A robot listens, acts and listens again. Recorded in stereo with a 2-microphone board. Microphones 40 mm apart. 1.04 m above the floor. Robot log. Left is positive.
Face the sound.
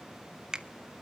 note: The finger snap: about 15° right or 165° right.
cmd yaw -15
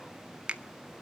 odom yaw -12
note: So it is at 150° right.
cmd yaw -150
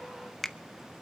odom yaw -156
end: Facing the finger snap.